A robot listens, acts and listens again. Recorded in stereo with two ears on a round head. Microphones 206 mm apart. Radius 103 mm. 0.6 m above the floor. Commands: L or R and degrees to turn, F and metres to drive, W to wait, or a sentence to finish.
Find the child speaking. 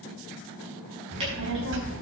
R55
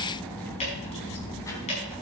L15
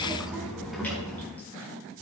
Found it: a child speaking, straight ahead, 2 to 4 m away.